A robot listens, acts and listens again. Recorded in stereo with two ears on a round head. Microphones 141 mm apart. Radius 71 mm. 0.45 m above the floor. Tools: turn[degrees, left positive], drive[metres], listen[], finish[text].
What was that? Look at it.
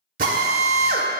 Thought: The drill: about 55° right or 125° right.
Action: turn[-55]
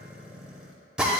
Action: finish[Found it: a drill, straight ahead, under 1 m away.]